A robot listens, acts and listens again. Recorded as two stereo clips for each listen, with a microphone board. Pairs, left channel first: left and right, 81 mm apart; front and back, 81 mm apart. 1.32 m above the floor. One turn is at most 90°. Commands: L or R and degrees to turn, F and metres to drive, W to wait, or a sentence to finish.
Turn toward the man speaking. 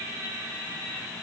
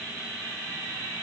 W
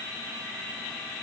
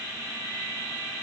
W
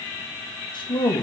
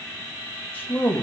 L75
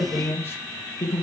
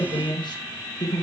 L35
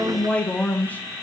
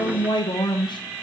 L20
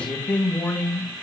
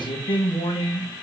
L15
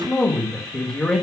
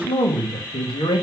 Facing the man speaking, 1 to 2 m away.